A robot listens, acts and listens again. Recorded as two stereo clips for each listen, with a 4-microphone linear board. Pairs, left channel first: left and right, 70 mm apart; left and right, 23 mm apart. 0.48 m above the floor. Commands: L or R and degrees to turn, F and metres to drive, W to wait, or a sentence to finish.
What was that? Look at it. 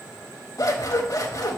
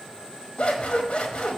L55
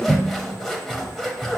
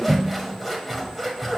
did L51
Found it: scissors, straight ahead, 1 to 2 m away.